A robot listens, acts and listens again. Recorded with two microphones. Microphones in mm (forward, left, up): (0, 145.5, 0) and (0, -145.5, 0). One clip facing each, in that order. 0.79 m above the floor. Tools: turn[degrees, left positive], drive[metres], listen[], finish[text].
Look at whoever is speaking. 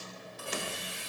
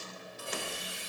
Action: listen[]
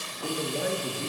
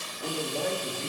Action: turn[30]
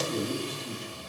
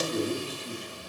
Action: turn[30]
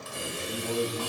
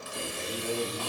Action: finish[Found it: a man speaking, straight ahead, 1 to 2 m away.]